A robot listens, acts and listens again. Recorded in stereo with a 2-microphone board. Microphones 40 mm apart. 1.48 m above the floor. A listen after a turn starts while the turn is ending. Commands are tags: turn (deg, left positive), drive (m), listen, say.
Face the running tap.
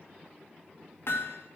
<listen/>
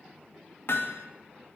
<listen/>
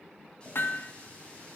<turn deg="25"/>
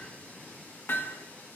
<listen/>
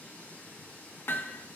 <turn deg="130"/>
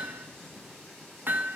<listen/>
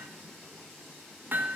<say>Found it: a running tap, straight ahead, over 4 m away.</say>